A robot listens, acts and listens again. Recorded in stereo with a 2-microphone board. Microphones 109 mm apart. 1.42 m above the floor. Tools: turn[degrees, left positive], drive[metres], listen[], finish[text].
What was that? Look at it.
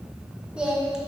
Action: turn[-30]
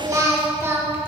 Thought: So it is at 160° right.
Action: turn[-160]
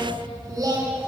Thought: The singing is now 35° right.
Action: turn[-35]
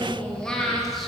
Action: finish[Found it: singing, straight ahead, 1 to 2 m away.]